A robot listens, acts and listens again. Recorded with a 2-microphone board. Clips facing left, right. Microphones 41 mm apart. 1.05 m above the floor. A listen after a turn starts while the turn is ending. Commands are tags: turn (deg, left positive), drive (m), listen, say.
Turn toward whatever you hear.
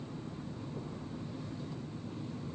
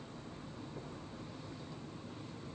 <listen/>
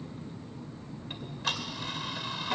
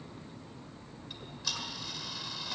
<turn deg="40"/>
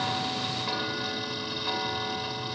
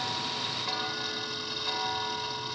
<say>Found it: ticking, straight ahead, 1 to 2 m away.</say>